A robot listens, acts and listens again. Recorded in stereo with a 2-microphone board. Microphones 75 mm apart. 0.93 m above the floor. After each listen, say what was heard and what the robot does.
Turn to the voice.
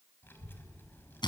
The child speaking: about 30° left or 150° left. Turn 30° left.
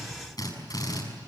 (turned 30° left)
Keep listening.
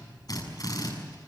So it is at 120° left. Turn 120° left.
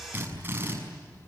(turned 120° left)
The child speaking is now 30° left. Turn 30° left.
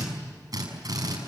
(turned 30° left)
Keep listening.
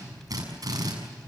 Found it: a child speaking, straight ahead, over 4 m away.